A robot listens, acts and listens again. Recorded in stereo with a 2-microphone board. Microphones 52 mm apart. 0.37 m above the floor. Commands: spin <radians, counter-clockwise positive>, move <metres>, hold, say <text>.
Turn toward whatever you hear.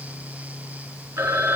spin -1.05
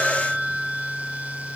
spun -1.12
say Found it: a phone ringing, straight ahead, 1 to 2 m away.